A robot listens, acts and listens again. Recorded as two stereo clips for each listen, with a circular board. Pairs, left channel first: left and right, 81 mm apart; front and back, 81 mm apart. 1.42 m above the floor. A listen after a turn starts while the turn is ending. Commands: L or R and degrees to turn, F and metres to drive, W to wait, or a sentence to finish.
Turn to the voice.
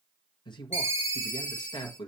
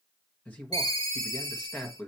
L70
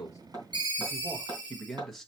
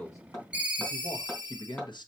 Facing the man speaking.